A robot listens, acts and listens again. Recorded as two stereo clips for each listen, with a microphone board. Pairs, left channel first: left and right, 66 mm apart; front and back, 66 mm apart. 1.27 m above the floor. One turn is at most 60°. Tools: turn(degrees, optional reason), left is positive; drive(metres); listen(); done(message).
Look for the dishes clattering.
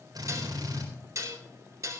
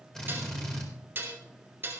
turn(degrees=-60, reason="The dishes clattering: 125° right.")
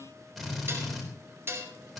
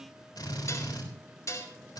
turn(degrees=-40, reason="The dishes clattering is now 40° right.")
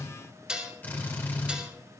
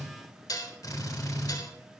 turn(degrees=-15, reason="The dishes clattering is now 15° right.")
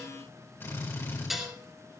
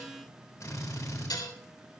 done("Facing the dishes clattering.")